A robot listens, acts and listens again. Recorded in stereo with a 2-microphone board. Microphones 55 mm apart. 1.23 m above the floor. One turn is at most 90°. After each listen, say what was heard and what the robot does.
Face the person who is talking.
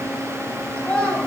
The child speaking: about 20° left or 160° left. Turn 20° left.
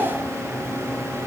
Keep listening.
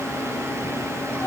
So it is at 140° left. Turn 90° left.
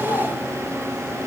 Nothing new. It was at 50° left. Turn 50° left.
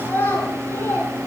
The child speaking is now 45° left. Turn 45° left.
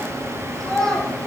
Found it: a child speaking, straight ahead.